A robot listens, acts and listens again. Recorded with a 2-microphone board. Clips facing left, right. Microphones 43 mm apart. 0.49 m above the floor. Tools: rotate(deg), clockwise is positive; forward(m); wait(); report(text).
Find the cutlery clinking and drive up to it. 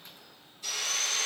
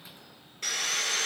wait()
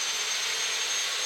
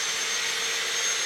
wait()
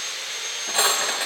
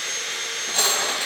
rotate(-20)
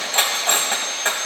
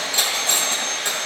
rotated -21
rotate(-140)
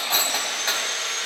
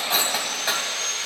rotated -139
forward(1.0)
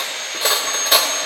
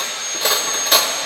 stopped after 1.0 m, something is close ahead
report("I am next to the cutlery clinking.")